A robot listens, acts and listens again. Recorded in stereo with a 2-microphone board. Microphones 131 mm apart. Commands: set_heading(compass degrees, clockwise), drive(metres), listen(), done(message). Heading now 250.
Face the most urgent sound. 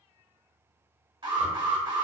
set_heading(290)
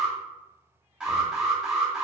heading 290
set_heading(300)
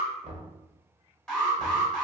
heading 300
done("Found it: an alarm, straight ahead.")